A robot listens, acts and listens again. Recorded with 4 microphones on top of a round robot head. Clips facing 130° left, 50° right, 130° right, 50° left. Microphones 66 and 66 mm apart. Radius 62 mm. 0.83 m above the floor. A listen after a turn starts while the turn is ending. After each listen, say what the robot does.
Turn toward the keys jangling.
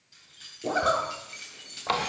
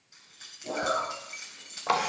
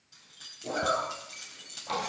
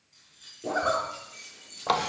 Turn 120° right.
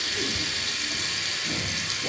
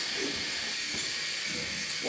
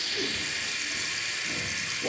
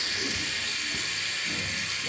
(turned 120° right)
Keep listening.
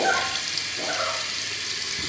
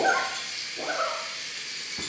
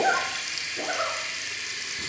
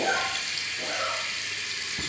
Keep listening.
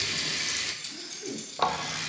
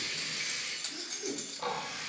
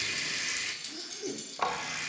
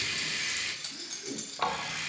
Facing the keys jangling.